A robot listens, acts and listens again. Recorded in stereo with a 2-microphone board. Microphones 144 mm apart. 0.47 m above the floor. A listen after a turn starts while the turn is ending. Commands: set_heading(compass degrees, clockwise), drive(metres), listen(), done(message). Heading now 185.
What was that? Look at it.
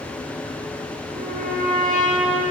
set_heading(275)
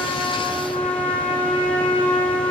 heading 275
set_heading(285)
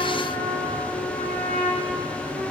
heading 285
done("Found it: a trumpet, straight ahead, 2 to 4 m away.")